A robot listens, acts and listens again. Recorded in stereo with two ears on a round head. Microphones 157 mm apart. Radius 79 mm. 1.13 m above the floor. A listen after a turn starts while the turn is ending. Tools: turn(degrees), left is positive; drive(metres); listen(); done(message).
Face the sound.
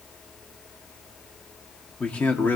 turn(degrees=30)
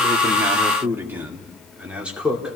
done("Found it: a man speaking, straight ahead, 2 to 4 m away.")